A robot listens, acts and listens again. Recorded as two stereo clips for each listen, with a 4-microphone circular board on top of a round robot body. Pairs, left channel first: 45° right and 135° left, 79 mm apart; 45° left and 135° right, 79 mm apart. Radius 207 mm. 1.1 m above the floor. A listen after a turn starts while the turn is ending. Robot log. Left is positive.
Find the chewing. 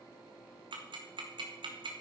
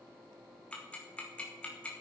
cmd idle
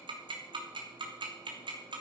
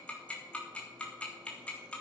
cmd idle
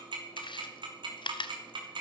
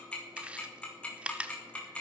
note: The chewing: 60° right.
cmd yaw -60
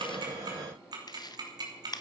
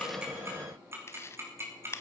note: The chewing is now 10° right.
cmd yaw -10
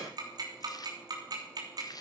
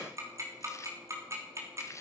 end: Facing the chewing.